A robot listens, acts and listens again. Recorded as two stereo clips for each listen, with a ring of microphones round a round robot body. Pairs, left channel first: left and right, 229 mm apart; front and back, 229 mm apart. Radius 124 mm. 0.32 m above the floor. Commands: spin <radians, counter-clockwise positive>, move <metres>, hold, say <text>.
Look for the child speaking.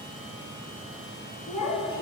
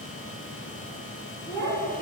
spin 1.22
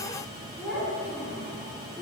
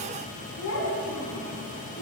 spin -0.17
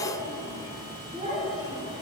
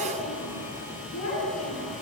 spin -0.44
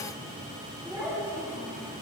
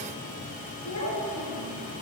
spin -0.17
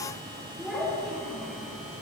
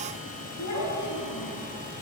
say Found it: a child speaking, straight ahead.